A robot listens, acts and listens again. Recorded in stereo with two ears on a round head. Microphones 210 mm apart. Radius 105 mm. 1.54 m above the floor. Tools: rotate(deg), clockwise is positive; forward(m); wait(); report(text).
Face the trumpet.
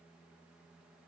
wait()
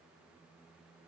wait()
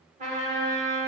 rotate(30)
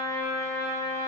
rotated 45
rotate(-15)
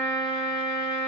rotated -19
report("Found it: a trumpet, straight ahead.")